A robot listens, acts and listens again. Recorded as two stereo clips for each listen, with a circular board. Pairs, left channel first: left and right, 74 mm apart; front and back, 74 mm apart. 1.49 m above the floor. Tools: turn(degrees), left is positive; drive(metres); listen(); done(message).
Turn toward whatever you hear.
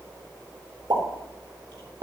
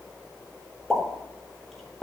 turn(degrees=-85)
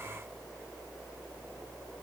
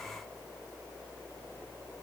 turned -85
done("Facing where the pop came from. I can't hear it now.")